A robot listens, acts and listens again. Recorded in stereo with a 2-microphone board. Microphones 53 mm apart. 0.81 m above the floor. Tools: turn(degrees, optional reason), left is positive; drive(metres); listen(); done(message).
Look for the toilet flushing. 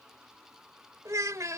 listen()
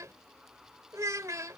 listen()
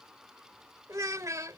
done("I can't make out a toilet flushing, only a child speaking.")